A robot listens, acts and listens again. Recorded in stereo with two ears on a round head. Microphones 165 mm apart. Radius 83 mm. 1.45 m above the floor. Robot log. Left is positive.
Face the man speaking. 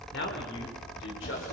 cmd yaw +90
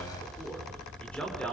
end: Found it: a man speaking, straight ahead, over 4 m away.